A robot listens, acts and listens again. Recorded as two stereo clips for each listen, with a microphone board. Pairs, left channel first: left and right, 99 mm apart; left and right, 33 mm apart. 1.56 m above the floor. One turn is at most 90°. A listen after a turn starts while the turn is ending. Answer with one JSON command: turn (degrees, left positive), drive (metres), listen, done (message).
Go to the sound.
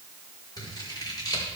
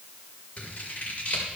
{"turn": 40}
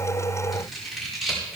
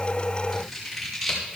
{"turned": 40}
{"drive": 1.0}
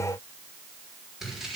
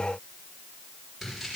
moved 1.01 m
{"drive": 1.0}
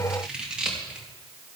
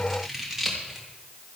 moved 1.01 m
{"turn": -10}
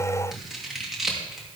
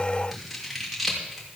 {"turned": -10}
{"drive": 1.0}
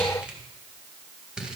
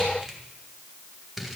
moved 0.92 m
{"turn": -10}
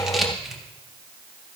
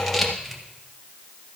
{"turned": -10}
{"drive": 1.0}
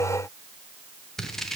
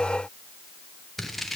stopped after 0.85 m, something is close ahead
{"done": "I am next to the scissors."}